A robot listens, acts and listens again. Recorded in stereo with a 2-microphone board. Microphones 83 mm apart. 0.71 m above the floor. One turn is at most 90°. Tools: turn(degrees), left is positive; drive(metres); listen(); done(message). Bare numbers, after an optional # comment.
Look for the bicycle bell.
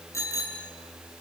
# The bicycle bell: about 35° left or 145° left.
turn(35)
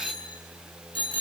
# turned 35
# So it is at 110° left.
turn(90)
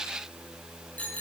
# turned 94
# The bicycle bell is now 15° left.
turn(15)
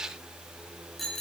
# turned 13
done("Found it: a bicycle bell, straight ahead, over 4 m away.")